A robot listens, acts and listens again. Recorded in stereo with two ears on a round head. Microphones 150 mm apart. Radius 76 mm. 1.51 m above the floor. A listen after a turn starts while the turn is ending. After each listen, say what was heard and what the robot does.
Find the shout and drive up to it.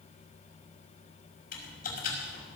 Keep listening.
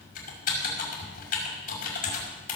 Keep listening.
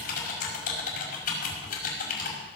I can't make out a shout to turn to.